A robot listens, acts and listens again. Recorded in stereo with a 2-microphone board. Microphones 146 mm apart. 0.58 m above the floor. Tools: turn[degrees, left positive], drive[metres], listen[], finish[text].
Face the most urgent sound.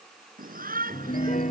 Action: turn[-90]
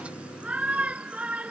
Thought: So it is at 10° right.
Action: turn[-10]
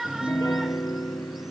Action: finish[Found it: a shout, straight ahead.]